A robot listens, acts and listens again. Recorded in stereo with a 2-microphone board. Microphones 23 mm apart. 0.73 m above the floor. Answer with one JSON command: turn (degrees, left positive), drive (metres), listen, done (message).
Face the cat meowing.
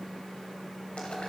{"listen": true}
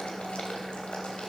{"listen": true}
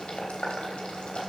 {"done": "I can't make out a cat meowing to turn to."}